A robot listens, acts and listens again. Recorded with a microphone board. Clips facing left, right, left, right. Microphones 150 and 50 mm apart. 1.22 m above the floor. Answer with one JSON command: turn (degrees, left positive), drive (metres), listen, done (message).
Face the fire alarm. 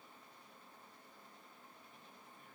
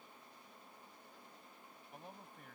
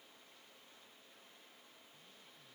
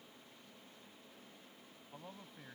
{"listen": true}
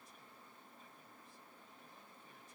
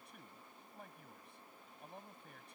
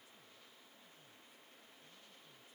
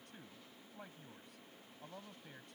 {"listen": true}
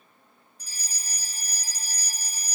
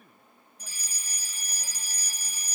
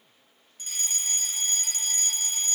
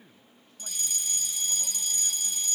{"turn": 40}
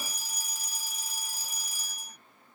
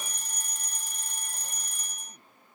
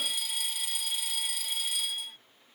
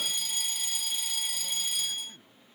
{"done": "Found it: a fire alarm, straight ahead."}